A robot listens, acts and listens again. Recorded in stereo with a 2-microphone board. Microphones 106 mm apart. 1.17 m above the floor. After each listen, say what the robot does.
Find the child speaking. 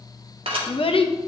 Turn 60° left.
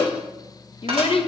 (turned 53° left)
Turn 65° left.
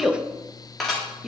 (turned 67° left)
Found it: a child speaking, straight ahead.